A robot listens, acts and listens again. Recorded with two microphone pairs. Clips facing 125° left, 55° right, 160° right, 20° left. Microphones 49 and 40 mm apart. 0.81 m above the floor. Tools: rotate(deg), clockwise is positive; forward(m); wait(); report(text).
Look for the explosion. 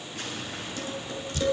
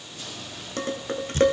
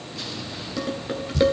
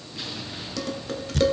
rotate(-100)
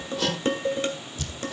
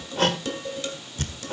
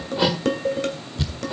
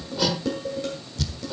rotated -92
rotate(-10)
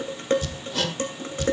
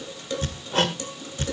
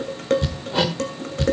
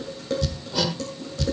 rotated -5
report("Facing where the explosion came from. I can't hear it now.")